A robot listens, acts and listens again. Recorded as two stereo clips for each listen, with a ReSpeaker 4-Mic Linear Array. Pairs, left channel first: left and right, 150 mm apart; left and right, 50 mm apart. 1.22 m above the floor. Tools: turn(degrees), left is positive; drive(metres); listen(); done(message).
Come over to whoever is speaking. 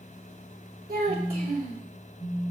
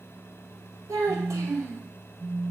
turn(degrees=-90)
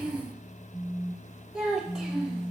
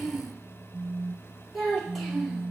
drive(metres=1.0)
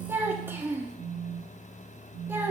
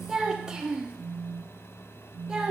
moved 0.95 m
turn(degrees=-15)
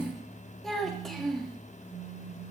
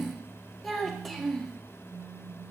drive(metres=1.0)
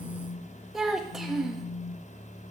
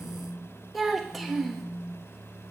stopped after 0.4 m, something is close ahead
done("I am next to the child speaking.")